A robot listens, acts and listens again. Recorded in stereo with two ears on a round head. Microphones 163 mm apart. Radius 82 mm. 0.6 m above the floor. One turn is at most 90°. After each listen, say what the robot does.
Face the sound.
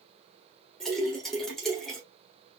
Turn 30° left.
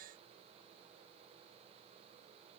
Keep listening.
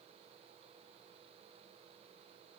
I heard a splash, but can't make it out now. It was about 25° right or 145° left.